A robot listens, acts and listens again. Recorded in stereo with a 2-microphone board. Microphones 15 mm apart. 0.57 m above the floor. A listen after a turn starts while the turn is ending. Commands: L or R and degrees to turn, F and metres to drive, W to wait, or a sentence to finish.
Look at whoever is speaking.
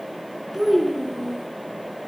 R30
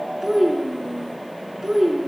R135
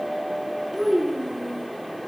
Facing the child speaking, over 4 m away.